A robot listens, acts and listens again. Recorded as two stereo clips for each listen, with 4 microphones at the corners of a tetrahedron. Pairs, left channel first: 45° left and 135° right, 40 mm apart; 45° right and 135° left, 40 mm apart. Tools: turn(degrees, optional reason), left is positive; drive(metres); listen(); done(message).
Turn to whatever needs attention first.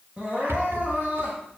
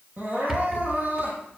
turn(degrees=165, reason="The crying: 165° left.")
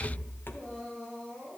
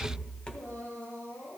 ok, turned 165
turn(degrees=-30, reason="The crying is now 30° right.")
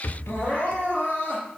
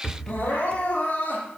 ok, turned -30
turn(degrees=-10, reason="The crying is now 10° right.")
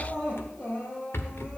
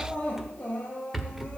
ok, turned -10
done("Facing the crying.")